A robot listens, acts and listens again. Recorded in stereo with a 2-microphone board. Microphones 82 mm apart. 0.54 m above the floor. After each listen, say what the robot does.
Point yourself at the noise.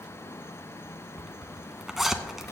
Turn 30° right.
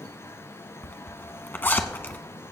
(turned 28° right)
Turn 25° left.
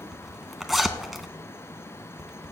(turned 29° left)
Facing the zipper, under 1 m away.